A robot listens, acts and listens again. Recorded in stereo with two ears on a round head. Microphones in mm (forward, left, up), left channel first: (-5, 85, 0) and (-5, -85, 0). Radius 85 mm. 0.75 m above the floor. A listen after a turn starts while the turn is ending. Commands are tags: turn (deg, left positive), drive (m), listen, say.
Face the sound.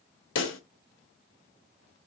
<turn deg="75"/>
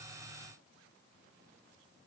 <listen/>
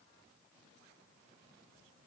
<say>I heard a pop, but can't make it out now. It was about straight ahead or 30° left.</say>